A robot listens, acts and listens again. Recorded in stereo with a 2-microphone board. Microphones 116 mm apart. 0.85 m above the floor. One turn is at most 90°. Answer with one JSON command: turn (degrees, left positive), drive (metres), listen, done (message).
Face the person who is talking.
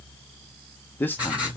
{"turn": 20}
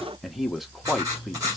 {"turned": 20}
{"done": "Found it: a man speaking, straight ahead, under 1 m away."}